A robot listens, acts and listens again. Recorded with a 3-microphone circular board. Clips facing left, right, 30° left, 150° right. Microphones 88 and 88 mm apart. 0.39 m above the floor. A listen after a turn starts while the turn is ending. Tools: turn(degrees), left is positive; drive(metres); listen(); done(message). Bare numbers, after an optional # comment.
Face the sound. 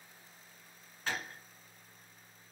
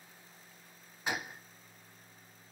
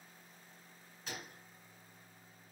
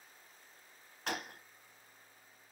# The gunshot: 165° right.
turn(-165)
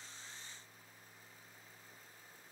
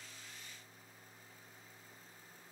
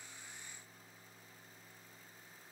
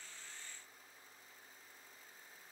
done("Facing where the gunshot came from. I can't hear it now.")